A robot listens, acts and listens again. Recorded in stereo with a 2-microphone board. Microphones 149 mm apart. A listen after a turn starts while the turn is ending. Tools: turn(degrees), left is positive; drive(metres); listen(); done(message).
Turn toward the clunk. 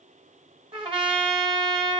listen()
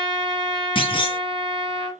turn(degrees=35)
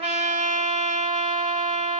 listen()
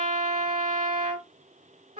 done("I heard a clunk, but can't make it out now. It was about straight ahead or 110° left.")